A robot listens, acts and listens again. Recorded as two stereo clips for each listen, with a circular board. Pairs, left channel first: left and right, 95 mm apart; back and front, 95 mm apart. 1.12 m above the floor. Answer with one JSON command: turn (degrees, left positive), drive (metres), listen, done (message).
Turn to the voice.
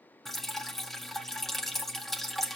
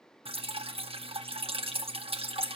{"listen": true}
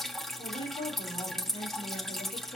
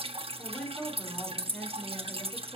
{"turn": 105}
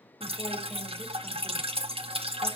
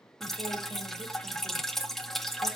{"listen": true}
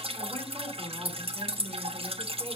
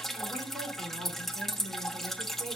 {"turn": 10}
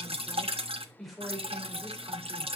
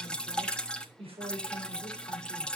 {"done": "Found it: a woman speaking, straight ahead, over 4 m away."}